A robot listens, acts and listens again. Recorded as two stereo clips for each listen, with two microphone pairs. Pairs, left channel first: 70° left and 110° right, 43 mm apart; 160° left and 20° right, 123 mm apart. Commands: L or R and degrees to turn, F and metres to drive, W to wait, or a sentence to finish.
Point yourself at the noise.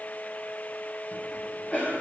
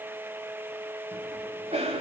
L15
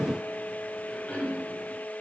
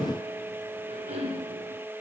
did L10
Facing the cough, over 4 m away.